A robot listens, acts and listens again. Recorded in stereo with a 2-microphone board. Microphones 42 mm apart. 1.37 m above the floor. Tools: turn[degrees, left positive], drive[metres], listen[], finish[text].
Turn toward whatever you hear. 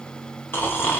Thought: The snoring: about 55° left or 125° left.
Action: turn[55]
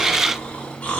Thought: So it is at 45° left.
Action: turn[45]
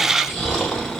Thought: The snoring is now 15° left.
Action: turn[15]
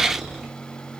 Action: finish[Facing the snoring.]